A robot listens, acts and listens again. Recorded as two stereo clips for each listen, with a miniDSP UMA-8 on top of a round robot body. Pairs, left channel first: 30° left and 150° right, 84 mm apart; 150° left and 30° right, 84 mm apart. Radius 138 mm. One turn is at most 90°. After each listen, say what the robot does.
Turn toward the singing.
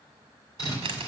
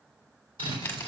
Keep listening.
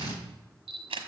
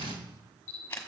Keep listening.
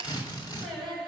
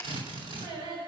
Turn 65° right.
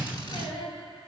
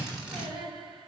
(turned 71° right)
Facing the singing, 2 to 4 m away.